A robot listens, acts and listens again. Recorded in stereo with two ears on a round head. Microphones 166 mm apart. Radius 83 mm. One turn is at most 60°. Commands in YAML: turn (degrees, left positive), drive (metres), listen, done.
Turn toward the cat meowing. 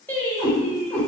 turn: 30
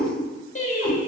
listen: true
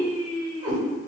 turn: -30
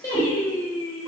listen: true
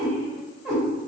turn: -15
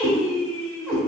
turn: -10
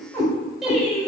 done: "Facing the cat meowing."